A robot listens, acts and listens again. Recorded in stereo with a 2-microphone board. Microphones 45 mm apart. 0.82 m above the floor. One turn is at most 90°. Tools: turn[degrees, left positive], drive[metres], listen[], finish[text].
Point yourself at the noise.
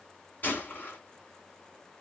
Thought: The gunshot: about 45° left or 135° left.
Action: turn[45]
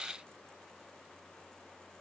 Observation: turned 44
Action: listen[]
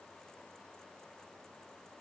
Action: finish[I heard a gunshot, but can't make it out now. It was about straight ahead or 90° left.]